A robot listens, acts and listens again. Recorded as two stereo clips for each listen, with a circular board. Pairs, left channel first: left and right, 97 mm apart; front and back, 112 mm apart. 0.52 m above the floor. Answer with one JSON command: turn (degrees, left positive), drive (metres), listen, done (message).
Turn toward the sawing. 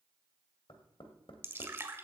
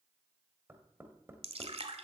{"listen": true}
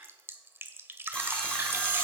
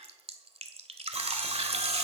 {"turn": 165}
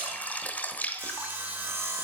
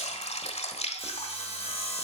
{"turn": -25}
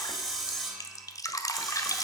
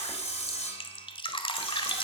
{"done": "Found it: sawing, straight ahead."}